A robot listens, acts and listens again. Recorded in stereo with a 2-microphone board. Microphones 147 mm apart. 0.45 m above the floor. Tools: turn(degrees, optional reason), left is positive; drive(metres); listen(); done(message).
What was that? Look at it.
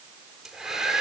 turn(degrees=30)
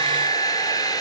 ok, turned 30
turn(degrees=155, reason="So it is at 155° left.")
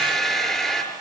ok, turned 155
done("Facing the hair dryer, over 4 m away.")